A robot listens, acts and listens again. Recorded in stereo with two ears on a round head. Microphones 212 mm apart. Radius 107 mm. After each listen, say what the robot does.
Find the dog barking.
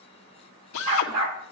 Turn 70° right.
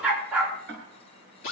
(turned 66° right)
Facing the dog barking.